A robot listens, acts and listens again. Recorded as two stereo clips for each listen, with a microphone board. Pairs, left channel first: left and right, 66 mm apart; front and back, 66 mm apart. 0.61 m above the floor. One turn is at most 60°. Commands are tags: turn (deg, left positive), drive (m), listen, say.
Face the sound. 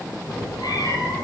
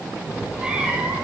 <turn deg="60"/>
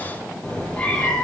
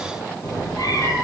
<turn deg="20"/>
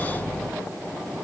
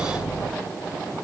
<turn deg="10"/>
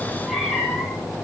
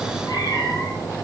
<say>Facing the cat meowing.</say>